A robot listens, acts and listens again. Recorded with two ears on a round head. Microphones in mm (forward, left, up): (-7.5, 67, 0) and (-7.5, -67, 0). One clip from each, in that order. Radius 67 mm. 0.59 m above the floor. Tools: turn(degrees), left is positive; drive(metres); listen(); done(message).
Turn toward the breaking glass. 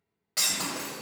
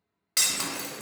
turn(degrees=-50)
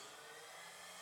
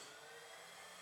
listen()
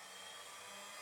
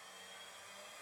done("I heard breaking glass, but can't make it out now. It was about straight ahead or 80° right.")